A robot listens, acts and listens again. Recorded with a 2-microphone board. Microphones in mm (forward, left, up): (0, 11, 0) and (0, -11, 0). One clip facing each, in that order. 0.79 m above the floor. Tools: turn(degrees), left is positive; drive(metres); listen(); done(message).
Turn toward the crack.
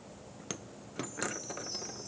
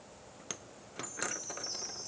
listen()
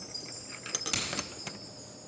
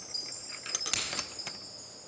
turn(degrees=-15)
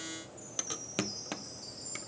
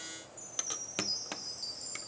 listen()
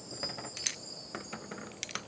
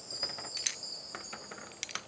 done("I heard a crack, but can't make it out now. It was about straight ahead or 150° right.")